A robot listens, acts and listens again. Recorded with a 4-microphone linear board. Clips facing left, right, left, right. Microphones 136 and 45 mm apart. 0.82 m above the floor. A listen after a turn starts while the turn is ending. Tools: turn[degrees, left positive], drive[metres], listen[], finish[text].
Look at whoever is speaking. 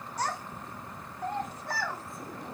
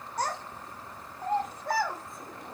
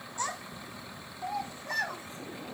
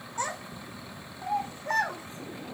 Thought: The child speaking: about 60° right or 120° right.
Action: turn[-60]
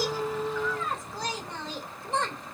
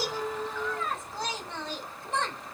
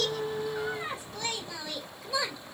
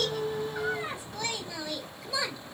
Action: finish[Found it: a child speaking, straight ahead.]